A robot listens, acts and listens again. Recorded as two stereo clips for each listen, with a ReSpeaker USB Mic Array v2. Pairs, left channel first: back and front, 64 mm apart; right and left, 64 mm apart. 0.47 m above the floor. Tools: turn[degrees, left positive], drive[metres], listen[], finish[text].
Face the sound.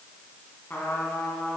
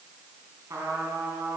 Thought: The trumpet: 125° left.
Action: turn[125]
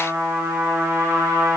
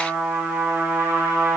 Thought: The trumpet is now 35° left.
Action: turn[35]
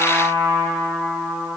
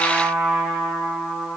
Action: finish[Found it: a trumpet, straight ahead, 1 to 2 m away.]